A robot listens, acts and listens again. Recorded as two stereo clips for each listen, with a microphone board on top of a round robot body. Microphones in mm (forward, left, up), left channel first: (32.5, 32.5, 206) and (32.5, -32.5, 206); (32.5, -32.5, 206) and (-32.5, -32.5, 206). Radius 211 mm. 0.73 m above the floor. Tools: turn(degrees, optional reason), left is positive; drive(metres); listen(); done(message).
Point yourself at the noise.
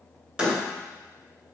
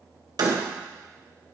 turn(degrees=-165, reason="The door slam: 165° right.")
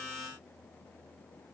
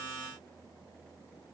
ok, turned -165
done("Facing where the door slam came from. I can't hear it now.")